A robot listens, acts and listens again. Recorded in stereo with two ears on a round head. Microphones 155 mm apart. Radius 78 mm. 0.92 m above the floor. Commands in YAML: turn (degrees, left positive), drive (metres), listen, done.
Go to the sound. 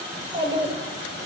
turn: -30
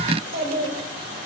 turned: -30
turn: -120
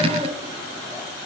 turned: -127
listen: true
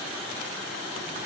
listen: true
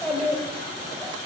drive: 1.0
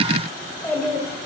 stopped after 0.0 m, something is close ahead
turn: 10
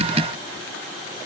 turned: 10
listen: true
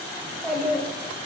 done: "Blocked. The child speaking is further on, straight ahead."